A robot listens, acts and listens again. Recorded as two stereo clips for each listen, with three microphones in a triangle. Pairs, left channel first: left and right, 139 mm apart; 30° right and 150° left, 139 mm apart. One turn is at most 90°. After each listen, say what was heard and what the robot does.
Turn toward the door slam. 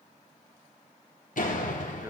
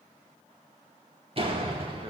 The door slam: 105° left. Turn 90° left.
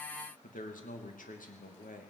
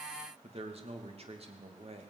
Nothing new. It was at 15° left. Turn 15° left.
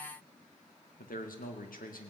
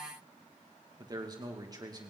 I heard a door slam from this way, but can't make it out now.